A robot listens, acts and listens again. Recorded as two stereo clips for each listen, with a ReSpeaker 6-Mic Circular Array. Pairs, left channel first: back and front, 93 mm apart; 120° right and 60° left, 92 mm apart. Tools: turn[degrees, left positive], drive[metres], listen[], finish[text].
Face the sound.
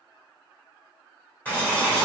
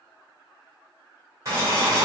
Thought: The boiling: 110° left.
Action: turn[110]
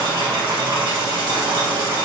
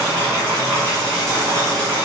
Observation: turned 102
Action: finish[Found it: boiling, straight ahead, 1 to 2 m away.]